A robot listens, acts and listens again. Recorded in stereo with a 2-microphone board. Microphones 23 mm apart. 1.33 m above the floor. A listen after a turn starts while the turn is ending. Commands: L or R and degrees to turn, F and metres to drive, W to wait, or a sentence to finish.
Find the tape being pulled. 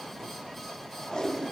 L45
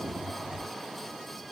W
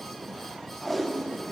L10
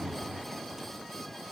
W
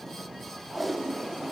Found it: tape being pulled, straight ahead.